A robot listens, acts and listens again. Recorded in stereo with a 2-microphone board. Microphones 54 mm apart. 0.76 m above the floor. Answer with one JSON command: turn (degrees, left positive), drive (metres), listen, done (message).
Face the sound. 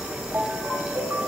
{"turn": -40}
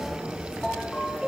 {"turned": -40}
{"done": "Found it: a ringtone, straight ahead."}